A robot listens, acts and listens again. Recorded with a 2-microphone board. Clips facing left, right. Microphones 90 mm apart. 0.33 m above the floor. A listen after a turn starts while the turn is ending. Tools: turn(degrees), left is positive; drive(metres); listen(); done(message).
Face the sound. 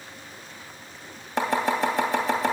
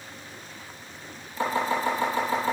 turn(degrees=90)
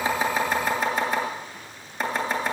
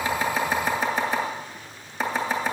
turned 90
done("Facing the chopping, 2 to 4 m away.")